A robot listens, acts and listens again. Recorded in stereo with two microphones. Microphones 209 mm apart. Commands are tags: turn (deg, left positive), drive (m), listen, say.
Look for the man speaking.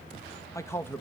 <turn deg="30"/>
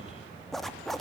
<listen/>
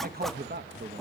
<turn deg="-55"/>
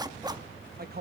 <turn deg="-50"/>
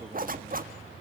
<listen/>
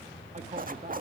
<turn deg="-35"/>
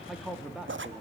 <say>Found it: a man speaking, straight ahead, 2 to 4 m away.</say>